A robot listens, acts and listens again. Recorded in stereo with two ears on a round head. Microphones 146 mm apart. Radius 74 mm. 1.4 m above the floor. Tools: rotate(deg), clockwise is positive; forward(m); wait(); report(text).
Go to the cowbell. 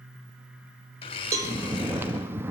rotate(20)
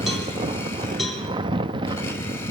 wait()
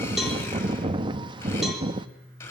wait()
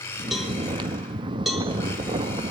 forward(1.0)
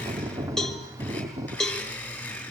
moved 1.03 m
forward(1.0)
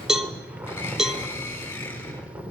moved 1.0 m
forward(1.0)
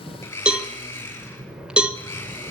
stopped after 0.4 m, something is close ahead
report("I am next to the cowbell.")